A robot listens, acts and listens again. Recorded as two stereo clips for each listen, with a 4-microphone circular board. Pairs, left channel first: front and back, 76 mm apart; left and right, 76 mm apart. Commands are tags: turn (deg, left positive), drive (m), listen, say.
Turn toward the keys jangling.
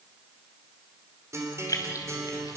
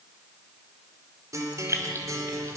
<turn deg="-40"/>
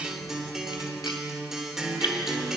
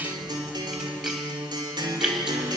<listen/>
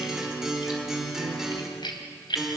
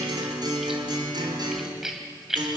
<say>Found it: keys jangling, straight ahead.</say>